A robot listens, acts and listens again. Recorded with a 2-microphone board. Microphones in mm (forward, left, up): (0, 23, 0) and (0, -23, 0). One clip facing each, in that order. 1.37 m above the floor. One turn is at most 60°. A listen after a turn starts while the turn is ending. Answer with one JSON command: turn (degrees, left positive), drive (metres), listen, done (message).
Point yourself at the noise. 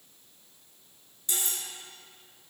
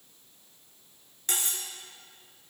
{"turn": -55}
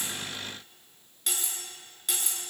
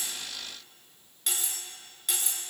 {"done": "Found it: cutlery clinking, straight ahead, 1 to 2 m away."}